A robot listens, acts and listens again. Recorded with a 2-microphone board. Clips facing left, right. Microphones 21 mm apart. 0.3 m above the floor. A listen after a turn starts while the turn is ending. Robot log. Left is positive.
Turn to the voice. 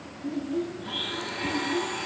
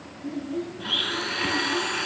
cmd yaw -30
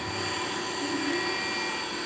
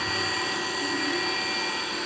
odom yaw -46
cmd idle
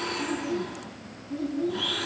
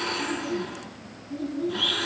note: So it is at 35° left.
cmd yaw +35
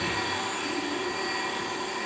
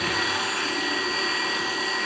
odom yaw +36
cmd idle
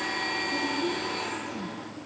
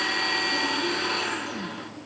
cmd idle
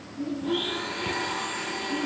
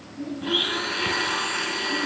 end: Found it: a child speaking, straight ahead.